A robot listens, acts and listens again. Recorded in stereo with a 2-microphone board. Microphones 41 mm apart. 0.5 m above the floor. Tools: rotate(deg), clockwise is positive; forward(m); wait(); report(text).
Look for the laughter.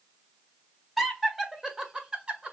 rotate(25)
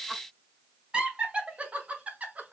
rotate(35)
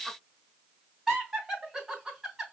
rotate(10)
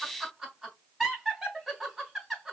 report("Found it: laughter, straight ahead.")